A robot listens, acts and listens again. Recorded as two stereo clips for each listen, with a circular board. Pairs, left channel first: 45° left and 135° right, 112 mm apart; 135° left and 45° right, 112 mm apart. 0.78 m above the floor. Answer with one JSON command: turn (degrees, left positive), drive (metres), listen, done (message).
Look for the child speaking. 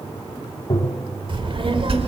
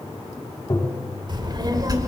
{"turn": -100}
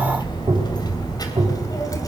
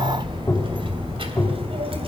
{"turn": -15}
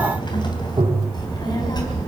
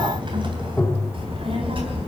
{"turn": -10}
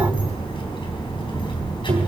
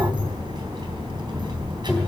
{"done": "Found it: a child speaking, straight ahead."}